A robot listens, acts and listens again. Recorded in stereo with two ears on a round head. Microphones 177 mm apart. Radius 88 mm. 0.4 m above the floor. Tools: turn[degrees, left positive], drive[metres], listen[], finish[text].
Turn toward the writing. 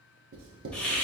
Thought: The writing: about 70° right or 110° right.
Action: turn[-70]
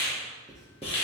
Action: finish[Found it: writing, straight ahead, 1 to 2 m away.]